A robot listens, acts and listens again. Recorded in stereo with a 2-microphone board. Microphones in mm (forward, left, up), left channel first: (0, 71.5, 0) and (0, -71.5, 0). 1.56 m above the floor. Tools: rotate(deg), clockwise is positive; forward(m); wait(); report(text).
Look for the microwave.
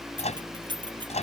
rotate(-50)
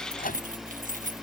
rotate(-80)
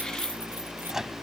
report("Found it: a microwave, straight ahead.")